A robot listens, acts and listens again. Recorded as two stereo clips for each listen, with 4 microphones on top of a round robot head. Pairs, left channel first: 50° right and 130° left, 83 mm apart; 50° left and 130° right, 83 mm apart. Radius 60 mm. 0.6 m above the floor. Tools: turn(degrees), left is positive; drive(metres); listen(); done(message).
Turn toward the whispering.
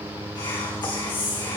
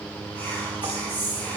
turn(degrees=-20)
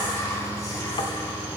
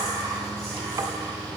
done("Found it: whispering, straight ahead.")